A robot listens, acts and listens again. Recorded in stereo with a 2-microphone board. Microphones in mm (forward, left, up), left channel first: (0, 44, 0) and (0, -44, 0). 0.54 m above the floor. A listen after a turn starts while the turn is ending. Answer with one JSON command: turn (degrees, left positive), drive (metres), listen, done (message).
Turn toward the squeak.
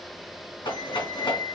{"turn": 30}
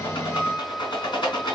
{"done": "Facing the squeak."}